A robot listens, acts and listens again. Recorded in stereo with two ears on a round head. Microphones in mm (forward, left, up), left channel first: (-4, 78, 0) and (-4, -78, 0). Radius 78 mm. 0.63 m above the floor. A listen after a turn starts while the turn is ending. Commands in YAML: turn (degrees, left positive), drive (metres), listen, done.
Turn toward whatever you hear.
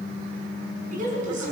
turn: -50
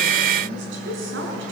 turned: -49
turn: -80
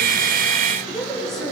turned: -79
done: "Facing the woman speaking, over 4 m away."